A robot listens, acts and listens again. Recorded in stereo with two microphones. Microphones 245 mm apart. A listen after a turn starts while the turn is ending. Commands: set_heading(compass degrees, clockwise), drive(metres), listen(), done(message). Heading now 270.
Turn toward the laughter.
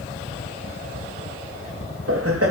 set_heading(340)
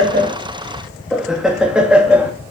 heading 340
done("Found it: laughter, straight ahead.")